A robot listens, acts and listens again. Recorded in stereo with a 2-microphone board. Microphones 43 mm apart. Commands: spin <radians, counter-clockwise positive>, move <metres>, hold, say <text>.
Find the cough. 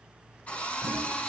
hold
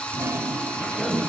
spin 0.35
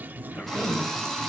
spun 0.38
spin 2.36
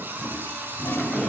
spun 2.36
hold
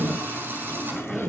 say Found it: a cough, straight ahead, 2 to 4 m away.